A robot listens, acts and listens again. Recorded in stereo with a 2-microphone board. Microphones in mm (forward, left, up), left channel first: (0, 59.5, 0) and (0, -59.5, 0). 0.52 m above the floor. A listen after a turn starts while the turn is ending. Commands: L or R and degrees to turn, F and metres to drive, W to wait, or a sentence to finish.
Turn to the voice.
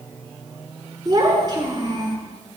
R40
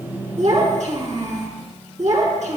R100
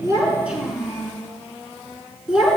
Found it: a child speaking, straight ahead, 2 to 4 m away.